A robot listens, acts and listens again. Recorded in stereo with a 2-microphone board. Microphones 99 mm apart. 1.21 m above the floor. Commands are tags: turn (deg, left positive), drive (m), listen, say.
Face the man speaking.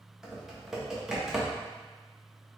<listen/>
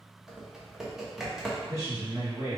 <turn deg="-30"/>
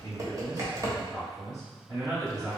<turn deg="-135"/>
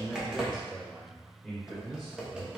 <say>Found it: a man speaking, straight ahead.</say>